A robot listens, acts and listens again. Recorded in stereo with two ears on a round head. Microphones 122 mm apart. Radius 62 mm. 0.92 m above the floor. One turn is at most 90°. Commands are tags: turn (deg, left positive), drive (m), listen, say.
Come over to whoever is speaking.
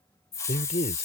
<turn deg="50"/>
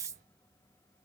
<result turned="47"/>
<listen/>
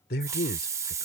<turn deg="85"/>
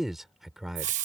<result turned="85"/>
<drive m="1.0"/>
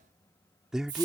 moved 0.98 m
<drive m="1.0"/>
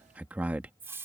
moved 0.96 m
<turn deg="-10"/>
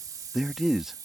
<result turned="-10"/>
<drive m="1.0"/>
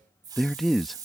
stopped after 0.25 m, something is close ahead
<say>I am next to the man speaking.</say>